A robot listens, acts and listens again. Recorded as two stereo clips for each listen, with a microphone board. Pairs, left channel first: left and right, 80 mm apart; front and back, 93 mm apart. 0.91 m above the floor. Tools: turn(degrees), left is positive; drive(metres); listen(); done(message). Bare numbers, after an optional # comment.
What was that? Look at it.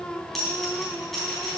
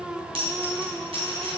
# The dropped coin: 175° left.
turn(175)
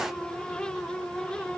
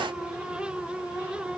done("I heard a dropped coin from this way, but can't make it out now.")